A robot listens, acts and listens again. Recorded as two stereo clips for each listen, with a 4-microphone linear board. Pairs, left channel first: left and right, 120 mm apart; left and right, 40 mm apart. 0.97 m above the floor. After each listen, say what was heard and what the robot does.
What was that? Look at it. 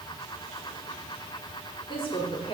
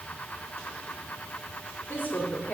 The woman speaking: about 50° left or 130° left. Turn 50° left.
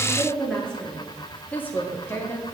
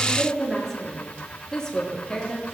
So it is at 25° left. Turn 25° left.
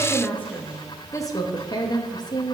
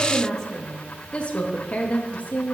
The woman speaking is now 35° left. Turn 35° left.
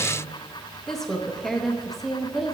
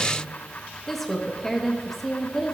Facing the woman speaking, 1 to 2 m away.